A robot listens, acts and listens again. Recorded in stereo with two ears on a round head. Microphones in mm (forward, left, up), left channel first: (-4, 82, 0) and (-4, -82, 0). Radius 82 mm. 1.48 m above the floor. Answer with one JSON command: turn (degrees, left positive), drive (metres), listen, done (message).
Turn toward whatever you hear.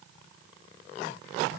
{"listen": true}
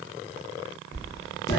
{"turn": 20}
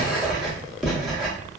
{"done": "Found it: writing, straight ahead, under 1 m away."}